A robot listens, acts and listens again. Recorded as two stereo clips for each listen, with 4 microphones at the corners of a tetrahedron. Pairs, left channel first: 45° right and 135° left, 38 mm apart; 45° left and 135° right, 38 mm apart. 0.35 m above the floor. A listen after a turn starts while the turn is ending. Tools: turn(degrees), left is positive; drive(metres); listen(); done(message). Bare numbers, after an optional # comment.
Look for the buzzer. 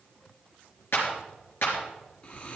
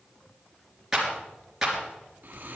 listen()
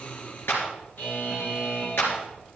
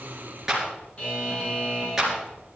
# The buzzer: 10° right.
turn(-10)
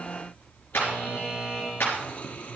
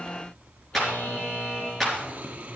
done("Facing the buzzer, over 4 m away.")